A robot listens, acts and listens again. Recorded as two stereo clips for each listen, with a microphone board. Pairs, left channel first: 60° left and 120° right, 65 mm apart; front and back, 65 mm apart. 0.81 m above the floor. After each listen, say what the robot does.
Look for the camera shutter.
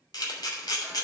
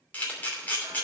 Turn 65° left.
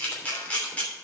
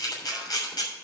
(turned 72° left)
Turn 10° right.
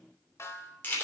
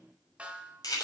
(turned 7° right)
Facing the camera shutter.